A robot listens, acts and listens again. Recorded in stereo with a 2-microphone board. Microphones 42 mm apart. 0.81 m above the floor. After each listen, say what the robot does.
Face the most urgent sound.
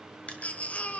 Turn 35° left.
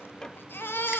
Turn 105° left.
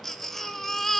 Turn 10° left.
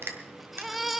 Found it: a baby crying, straight ahead, under 1 m away.